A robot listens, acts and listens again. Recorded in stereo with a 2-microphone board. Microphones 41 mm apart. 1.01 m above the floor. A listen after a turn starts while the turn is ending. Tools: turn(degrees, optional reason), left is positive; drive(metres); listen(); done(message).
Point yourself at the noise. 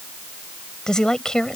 turn(degrees=15, reason="The woman speaking: about 15° left or 165° left.")
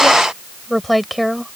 turn(degrees=30)
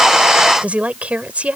turn(degrees=-30, reason="So it is at 30° right.")
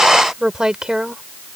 turn(degrees=-15, reason="The woman speaking is now 15° right.")
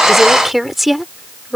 done("Found it: a woman speaking, straight ahead.")